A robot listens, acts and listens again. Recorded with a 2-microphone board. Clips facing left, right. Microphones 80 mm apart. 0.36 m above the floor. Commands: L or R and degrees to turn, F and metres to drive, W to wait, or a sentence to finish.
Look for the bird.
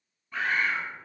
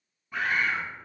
R30
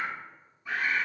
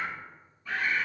L20
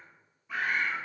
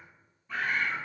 Facing the bird, 1 to 2 m away.